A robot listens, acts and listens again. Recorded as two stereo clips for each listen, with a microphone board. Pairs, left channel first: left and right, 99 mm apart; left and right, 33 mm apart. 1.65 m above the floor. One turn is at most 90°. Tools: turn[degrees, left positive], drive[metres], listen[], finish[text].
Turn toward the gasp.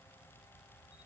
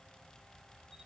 Action: listen[]
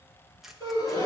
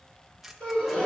Thought: The gasp: about 40° left or 140° left.
Action: turn[40]
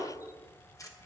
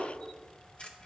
Action: listen[]
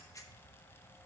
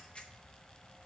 Action: finish[I heard a gasp, but can't make it out now. It was about straight ahead or 100° left.]